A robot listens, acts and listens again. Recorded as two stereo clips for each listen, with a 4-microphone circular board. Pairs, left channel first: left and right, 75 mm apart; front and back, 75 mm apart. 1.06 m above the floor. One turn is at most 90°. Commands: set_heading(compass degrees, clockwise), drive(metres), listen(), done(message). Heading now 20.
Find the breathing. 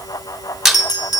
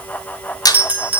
listen()
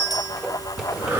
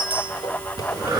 set_heading(110)
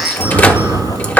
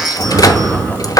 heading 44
set_heading(134)
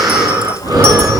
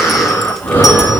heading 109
set_heading(174)
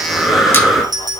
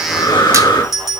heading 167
done("Found it: breathing, straight ahead.")